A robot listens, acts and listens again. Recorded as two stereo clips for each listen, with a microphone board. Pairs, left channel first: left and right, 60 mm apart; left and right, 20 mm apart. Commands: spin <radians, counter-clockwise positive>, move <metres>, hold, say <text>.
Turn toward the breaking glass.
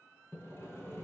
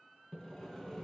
hold
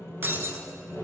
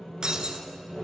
spin -0.70
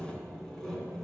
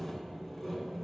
hold
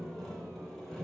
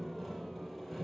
say I heard breaking glass, but can't make it out now. It was about straight ahead or 100° right.